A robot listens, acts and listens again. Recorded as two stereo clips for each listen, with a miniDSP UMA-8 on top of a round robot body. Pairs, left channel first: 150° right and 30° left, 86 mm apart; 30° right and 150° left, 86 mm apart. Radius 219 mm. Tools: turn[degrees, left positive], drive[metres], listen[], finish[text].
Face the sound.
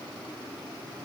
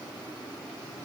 Action: listen[]
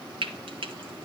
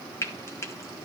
Thought: The frying: 25° left.
Action: turn[25]
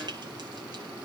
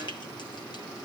Action: listen[]
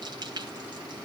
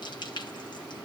Action: finish[Facing the frying, 2 to 4 m away.]